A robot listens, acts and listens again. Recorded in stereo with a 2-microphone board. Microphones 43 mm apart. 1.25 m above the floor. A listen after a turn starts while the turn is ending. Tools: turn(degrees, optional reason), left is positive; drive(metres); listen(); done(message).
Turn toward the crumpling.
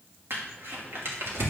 turn(degrees=-65, reason="The crumpling: about 65° right or 115° right.")
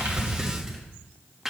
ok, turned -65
done("Found it: crumpling, straight ahead.")